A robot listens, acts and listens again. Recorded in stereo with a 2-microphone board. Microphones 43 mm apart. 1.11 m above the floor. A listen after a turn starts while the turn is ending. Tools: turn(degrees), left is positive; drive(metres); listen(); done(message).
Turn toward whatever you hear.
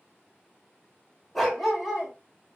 turn(degrees=-30)
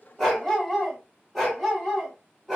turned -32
turn(degrees=-30)
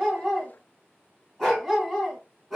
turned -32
done("Facing the dog barking, 2 to 4 m away.")